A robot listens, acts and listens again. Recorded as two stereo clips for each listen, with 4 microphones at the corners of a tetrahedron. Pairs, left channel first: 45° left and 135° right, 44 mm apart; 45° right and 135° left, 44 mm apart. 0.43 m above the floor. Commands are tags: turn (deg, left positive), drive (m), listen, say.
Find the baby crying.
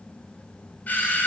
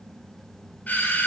<listen/>
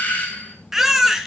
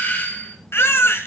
<turn deg="-55"/>
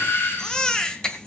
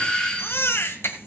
<turn deg="-30"/>
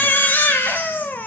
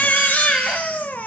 <say>Facing the baby crying, 1 to 2 m away.</say>